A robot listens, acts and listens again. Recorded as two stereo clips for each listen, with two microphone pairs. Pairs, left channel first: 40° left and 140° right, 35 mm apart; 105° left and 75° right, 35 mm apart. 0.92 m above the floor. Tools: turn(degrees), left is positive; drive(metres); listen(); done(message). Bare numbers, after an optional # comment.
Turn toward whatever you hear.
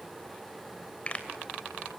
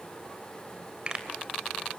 # The pop: 10° right.
turn(-10)
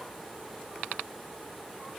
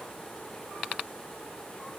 done("Facing where the pop came from. I can't hear it now.")